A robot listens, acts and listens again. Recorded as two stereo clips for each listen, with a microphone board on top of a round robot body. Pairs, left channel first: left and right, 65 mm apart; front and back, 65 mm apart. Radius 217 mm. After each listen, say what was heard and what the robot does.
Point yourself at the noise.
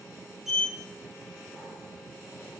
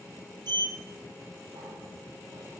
The sliding door: 175° right. Turn 175° right.
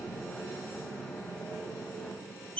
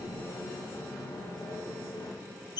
The sliding door is now 20° left. Turn 20° left.
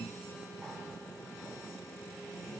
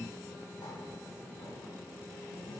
Found it: a sliding door, straight ahead, 1 to 2 m away.